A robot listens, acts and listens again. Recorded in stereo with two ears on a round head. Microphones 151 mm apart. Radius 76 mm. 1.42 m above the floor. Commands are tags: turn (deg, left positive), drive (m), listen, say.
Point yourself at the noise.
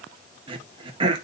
<turn deg="-30"/>
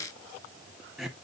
<say>Found it: throat clearing, straight ahead, 1 to 2 m away.</say>